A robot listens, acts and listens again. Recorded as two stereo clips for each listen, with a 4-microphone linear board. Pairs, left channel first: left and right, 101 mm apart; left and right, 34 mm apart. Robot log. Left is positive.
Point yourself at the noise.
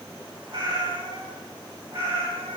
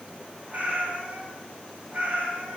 note: The cat meowing: about 70° right or 110° right.
cmd yaw -70
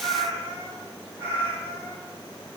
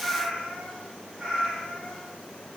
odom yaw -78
note: So it is at 20° right.
cmd yaw -20
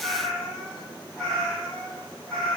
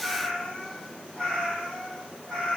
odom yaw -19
note: The cat meowing is now 10° left.
cmd yaw +10
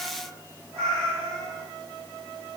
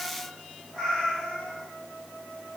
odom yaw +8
end: Facing the cat meowing.